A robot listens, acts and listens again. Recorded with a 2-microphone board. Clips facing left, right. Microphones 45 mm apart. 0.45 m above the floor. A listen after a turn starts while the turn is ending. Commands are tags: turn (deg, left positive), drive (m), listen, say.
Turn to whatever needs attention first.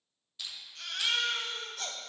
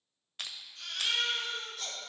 <turn deg="65"/>
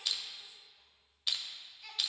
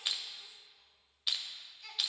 <say>Facing the baby crying.</say>